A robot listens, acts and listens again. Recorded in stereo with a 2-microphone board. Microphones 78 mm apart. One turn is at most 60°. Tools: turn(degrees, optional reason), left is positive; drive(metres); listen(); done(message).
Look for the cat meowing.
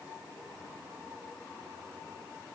listen()
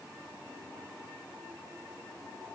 listen()
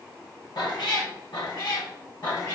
turn(degrees=55, reason="The cat meowing: about 55° left or 125° left.")
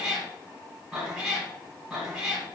done("Found it: a cat meowing, straight ahead, 2 to 4 m away.")